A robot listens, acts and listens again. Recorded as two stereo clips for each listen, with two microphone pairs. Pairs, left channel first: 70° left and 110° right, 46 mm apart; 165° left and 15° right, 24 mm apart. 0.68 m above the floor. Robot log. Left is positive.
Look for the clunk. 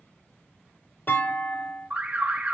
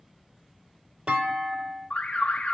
note: The clunk: 25° left.
cmd yaw +25
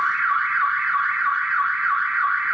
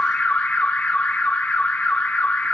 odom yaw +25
end: Facing where the clunk came from. I can't hear it now.